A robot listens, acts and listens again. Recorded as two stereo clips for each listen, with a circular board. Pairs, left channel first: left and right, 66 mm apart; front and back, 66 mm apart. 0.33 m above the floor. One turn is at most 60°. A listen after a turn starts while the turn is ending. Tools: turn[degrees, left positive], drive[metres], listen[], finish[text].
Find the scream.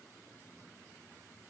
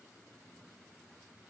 Action: listen[]
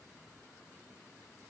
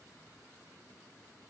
Action: listen[]
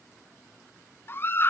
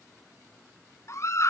Thought: The scream: 40° left.
Action: turn[40]
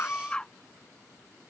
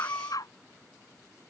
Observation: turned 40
Thought: The scream is now 15° left.
Action: turn[15]
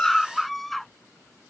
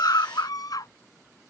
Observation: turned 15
Action: finish[Facing the scream.]